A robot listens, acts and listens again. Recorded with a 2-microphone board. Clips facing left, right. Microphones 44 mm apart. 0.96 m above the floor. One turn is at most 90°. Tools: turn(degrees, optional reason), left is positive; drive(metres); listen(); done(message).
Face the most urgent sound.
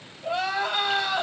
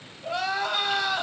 turn(degrees=20, reason="The crying: about 20° left or 160° left.")
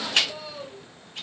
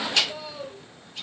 done("Found it: crying, straight ahead, 1 to 2 m away.")